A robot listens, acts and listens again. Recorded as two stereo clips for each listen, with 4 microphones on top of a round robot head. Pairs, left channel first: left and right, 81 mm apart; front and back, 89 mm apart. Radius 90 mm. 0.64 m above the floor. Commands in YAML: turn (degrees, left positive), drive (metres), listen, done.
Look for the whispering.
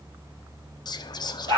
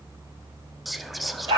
turn: 95
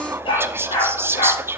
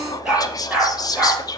turn: -35
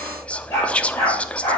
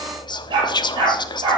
turn: 15
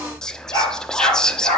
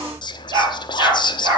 turn: 10
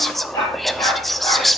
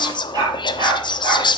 done: "Found it: whispering, straight ahead, under 1 m away."